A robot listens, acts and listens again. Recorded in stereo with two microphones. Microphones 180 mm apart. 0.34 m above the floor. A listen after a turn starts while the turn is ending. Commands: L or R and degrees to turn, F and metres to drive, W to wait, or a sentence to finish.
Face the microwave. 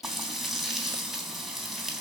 W
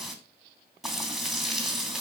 W
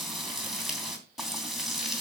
I can't make out a microwave, only frying.